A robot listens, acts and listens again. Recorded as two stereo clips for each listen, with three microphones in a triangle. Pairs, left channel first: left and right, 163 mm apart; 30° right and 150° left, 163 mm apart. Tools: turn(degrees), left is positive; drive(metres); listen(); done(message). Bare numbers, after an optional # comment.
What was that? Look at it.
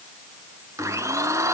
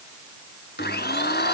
# The blender: 15° right.
turn(-15)
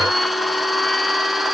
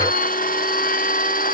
done("Facing the blender.")